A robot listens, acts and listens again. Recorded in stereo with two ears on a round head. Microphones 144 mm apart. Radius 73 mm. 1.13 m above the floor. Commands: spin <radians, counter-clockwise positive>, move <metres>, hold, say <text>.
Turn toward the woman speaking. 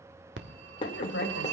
spin 1.22
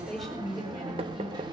say Found it: a woman speaking, straight ahead.